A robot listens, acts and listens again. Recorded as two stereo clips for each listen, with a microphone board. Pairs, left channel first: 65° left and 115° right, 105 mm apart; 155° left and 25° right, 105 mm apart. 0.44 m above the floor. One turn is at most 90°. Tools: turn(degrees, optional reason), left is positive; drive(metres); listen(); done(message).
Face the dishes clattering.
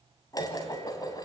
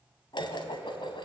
turn(degrees=90, reason="The dishes clattering: 120° left.")
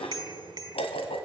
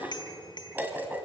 turn(degrees=50, reason="The dishes clattering is now 50° left.")
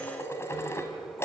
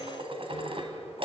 done("Facing the dishes clattering.")